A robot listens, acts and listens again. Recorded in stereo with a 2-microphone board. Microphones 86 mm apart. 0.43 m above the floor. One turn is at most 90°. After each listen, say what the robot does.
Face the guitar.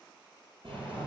Keep listening.
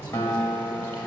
Turn 30° left.
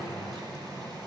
Keep listening.
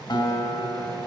Turn 90° left.
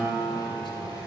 Turn 15° left.
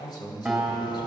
Facing the guitar.